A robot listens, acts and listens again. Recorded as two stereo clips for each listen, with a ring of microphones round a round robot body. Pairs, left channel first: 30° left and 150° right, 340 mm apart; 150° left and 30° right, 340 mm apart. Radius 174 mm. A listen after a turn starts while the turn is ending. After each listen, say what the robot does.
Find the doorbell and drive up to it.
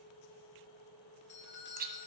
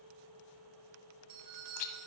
Turn 25° right.
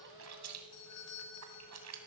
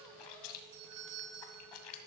Drive 1.0 m forward.
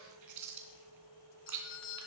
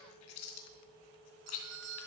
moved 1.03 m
Turn 10° right.
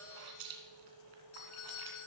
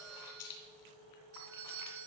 Drive 1.0 m forward.
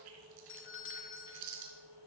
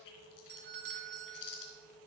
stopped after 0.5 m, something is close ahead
Turn 10° left.
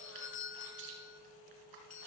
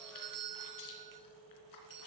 Arrived at the doorbell, straight ahead.